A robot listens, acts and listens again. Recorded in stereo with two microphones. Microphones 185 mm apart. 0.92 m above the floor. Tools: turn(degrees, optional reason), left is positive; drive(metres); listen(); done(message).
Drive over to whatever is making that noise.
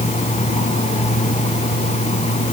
listen()
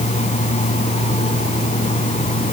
listen()
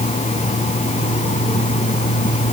done("I can't make out anything.")